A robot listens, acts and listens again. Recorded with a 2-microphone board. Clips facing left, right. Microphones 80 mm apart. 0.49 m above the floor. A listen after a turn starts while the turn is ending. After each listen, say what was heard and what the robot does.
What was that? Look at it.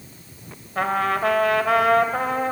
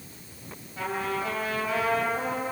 The trumpet: about 70° left or 110° left. Turn 70° left.
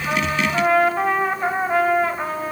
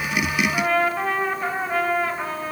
So it is at 15° left. Turn 15° left.
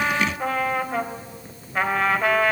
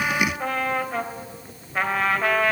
Found it: a trumpet, straight ahead.